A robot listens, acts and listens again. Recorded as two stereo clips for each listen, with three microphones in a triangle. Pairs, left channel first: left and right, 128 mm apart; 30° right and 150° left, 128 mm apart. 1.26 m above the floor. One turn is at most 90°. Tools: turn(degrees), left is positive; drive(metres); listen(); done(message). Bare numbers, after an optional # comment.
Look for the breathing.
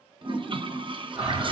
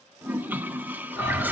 done("Found it: breathing, straight ahead, over 4 m away.")